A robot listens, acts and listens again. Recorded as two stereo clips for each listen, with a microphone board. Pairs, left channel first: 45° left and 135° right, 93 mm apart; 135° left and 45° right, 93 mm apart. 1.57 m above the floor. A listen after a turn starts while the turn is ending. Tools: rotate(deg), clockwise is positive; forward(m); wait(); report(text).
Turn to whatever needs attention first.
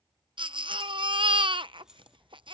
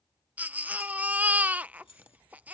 rotate(115)
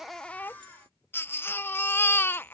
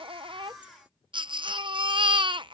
rotate(20)
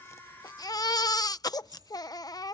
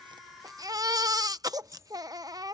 report("Found it: a baby crying, straight ahead.")